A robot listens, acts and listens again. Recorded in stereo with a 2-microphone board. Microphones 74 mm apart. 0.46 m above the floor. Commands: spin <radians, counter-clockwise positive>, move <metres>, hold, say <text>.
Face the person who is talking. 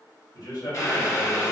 spin 1.05
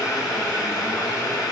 hold
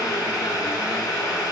hold
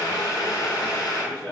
spin 0.17
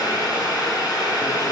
hold
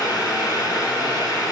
hold
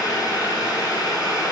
say I heard a man speaking from this way, but can't make it out now.